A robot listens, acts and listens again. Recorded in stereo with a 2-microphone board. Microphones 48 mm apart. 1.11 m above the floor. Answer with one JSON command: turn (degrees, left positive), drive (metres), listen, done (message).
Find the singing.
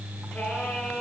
{"turn": 25}
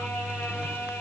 {"turn": 130}
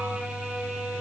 {"done": "Facing the singing."}